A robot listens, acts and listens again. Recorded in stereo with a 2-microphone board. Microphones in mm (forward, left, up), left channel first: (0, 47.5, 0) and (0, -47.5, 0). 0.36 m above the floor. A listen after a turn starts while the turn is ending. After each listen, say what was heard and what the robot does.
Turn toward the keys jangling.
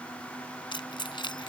The keys jangling: about 60° left or 120° left. Turn 60° left.
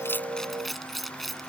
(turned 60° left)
Found it: keys jangling, straight ahead.